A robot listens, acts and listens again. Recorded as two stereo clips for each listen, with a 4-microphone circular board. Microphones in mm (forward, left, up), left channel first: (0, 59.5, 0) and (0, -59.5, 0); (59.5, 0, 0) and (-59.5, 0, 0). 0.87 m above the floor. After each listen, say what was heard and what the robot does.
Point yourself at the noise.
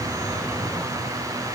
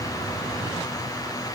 Keep listening.
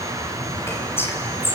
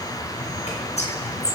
The whispering: 20° left. Turn 20° left.
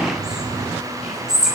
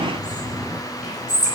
Facing the whispering, over 4 m away.